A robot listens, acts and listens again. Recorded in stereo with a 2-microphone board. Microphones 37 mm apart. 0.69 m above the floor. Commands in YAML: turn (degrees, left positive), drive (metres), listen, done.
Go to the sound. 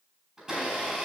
turn: -30
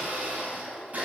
turn: -135
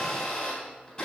turn: 20
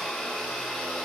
drive: 1.0
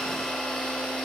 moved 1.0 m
turn: 10
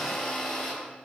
drive: 1.0
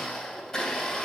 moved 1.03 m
turn: 10
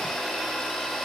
drive: 1.0
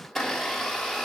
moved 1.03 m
drive: 1.0
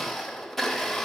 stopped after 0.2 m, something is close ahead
done: "I am next to the blender."